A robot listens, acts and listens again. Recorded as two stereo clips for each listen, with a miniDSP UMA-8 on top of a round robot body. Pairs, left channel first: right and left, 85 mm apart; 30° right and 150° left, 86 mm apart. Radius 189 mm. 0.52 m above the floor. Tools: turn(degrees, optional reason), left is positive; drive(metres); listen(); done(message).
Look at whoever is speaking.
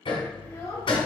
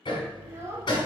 turn(degrees=-145, reason="The child speaking: 145° right.")
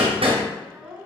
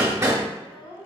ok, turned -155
done("Facing the child speaking, 1 to 2 m away.")